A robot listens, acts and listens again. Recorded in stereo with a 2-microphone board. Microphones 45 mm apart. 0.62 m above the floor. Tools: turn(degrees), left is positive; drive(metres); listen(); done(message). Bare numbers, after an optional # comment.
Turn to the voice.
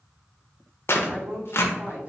# The woman speaking: about 40° right or 140° right.
turn(-40)
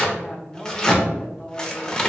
done("Facing the woman speaking, 1 to 2 m away.")